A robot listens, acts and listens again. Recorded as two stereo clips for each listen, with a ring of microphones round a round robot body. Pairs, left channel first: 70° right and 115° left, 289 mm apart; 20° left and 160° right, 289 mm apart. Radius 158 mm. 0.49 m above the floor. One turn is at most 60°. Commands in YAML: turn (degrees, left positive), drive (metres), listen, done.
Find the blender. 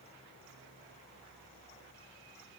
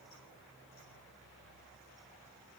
listen: true
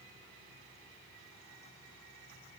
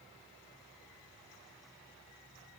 listen: true
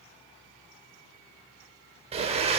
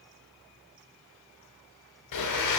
turn: 45
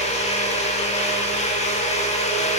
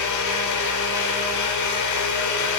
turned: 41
done: "Found it: a blender, straight ahead."